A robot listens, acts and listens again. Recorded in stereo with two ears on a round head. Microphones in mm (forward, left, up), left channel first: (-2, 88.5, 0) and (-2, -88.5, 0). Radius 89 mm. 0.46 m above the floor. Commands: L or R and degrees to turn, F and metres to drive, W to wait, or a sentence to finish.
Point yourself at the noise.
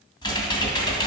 L25
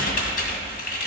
L130
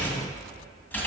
L10
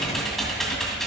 Facing the typing on a keyboard, 2 to 4 m away.